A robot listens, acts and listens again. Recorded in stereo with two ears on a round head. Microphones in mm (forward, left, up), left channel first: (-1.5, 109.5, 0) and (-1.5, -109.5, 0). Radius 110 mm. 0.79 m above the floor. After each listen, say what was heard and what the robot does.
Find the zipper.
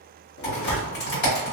The zipper: about 55° left or 125° left. Turn 55° left.
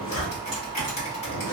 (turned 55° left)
So it is at 60° left. Turn 60° left.
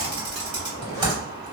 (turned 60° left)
The zipper is now 15° left. Turn 15° left.
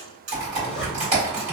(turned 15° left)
Facing the zipper, under 1 m away.